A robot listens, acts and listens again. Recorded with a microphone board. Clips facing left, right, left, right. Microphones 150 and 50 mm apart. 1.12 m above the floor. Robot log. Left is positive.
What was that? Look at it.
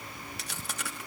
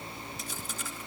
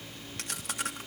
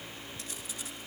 note: The chewing: about 75° left or 105° left.
cmd yaw +75
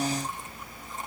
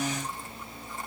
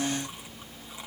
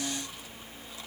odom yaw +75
cmd idle
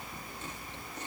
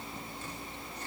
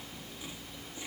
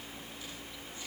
cmd idle
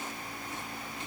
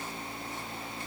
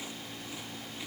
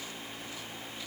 end: I heard chewing, but can't make it out now. It was about straight ahead or 30° left.